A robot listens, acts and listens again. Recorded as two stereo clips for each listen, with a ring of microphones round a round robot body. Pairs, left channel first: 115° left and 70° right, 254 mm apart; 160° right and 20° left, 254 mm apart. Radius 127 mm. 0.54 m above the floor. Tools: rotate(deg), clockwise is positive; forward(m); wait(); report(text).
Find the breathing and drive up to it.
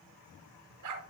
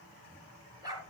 wait()
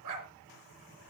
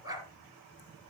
wait()
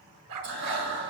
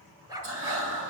rotate(20)
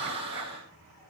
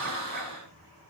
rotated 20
forward(1.0)
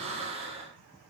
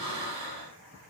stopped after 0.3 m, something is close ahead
report("Blocked. The breathing is further on, straight ahead.")